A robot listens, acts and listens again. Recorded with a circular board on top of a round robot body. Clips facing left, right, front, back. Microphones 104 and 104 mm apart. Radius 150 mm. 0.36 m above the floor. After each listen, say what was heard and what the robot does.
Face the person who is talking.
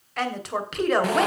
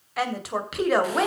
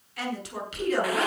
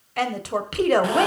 The woman speaking: straight behind. Turn 180° left.
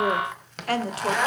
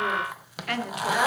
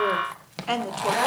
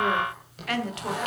The woman speaking is now 45° left. Turn 45° left.
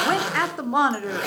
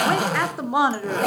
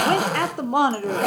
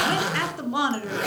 The woman speaking is now 10° right. Turn 10° right.
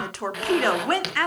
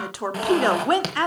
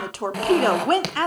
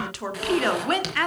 The woman speaking is now 40° right. Turn 40° right.
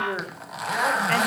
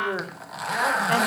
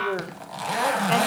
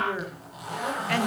The woman speaking is now 20° right. Turn 20° right.
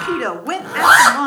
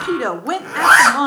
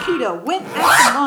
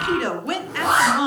The woman speaking is now 15° right. Turn 15° right.
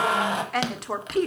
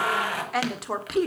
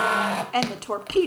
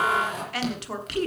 Found it: a woman speaking, straight ahead, 1 to 2 m away.